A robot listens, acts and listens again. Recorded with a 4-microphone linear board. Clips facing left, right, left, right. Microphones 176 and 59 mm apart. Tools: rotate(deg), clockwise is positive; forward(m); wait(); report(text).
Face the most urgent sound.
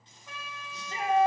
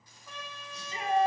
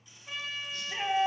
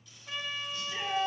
rotate(-65)
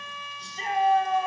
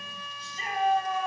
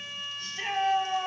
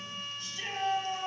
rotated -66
rotate(-45)
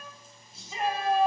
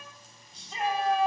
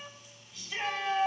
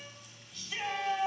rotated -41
report("Found it: a shout, straight ahead.")